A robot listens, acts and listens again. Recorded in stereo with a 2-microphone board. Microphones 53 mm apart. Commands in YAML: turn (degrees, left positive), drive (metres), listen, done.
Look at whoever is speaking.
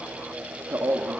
turn: -50
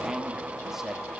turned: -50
turn: -10
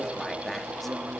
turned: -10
done: "Facing the man speaking, 1 to 2 m away."